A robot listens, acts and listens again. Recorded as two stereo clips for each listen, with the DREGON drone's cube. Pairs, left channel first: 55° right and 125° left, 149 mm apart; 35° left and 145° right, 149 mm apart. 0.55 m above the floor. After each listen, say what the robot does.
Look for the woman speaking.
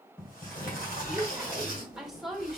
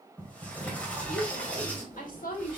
Turn 35° left.
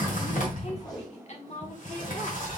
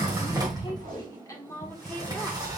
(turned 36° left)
Turn 35° right.
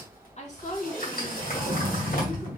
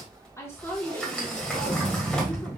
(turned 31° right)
Turn 40° right.
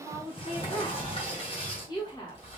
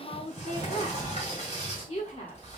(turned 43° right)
Facing the woman speaking, 1 to 2 m away.